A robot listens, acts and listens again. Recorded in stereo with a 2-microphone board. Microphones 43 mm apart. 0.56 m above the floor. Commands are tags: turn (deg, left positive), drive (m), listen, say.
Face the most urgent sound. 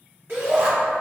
<turn deg="-50"/>
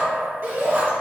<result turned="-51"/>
<turn deg="-60"/>
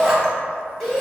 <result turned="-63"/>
<say>Facing the shout, 1 to 2 m away.</say>